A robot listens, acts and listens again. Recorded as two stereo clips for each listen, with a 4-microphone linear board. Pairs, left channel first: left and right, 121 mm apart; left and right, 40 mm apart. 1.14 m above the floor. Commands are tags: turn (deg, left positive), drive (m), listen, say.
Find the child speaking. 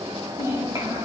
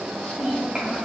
<turn deg="-30"/>
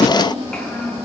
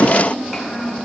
<say>Facing the child speaking, over 4 m away.</say>